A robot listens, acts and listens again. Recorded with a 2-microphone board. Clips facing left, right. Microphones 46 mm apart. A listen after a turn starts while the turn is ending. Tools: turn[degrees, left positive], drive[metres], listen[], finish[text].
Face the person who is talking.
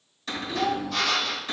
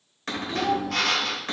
Action: turn[30]
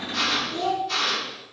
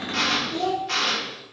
Thought: So it is at 150° left.
Action: turn[150]
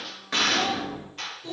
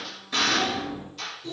Thought: The child speaking is now 25° left.
Action: turn[25]
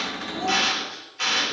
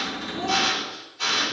Action: listen[]
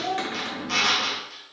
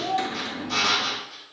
Thought: The child speaking is now 15° right.
Action: turn[-15]
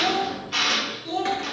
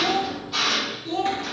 Action: finish[Found it: a child speaking, straight ahead.]